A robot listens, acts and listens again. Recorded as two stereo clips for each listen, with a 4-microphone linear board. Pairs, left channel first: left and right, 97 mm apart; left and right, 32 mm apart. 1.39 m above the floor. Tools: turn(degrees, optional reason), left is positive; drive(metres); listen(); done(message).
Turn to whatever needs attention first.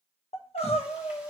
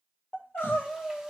turn(degrees=90)
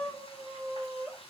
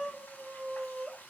done("Found it: crying, straight ahead, 1 to 2 m away.")